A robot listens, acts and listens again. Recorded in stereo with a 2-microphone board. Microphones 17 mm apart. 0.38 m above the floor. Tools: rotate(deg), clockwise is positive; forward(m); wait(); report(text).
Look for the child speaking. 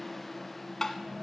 wait()
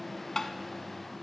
wait()
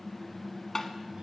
report("I can't make out a child speaking to turn to.")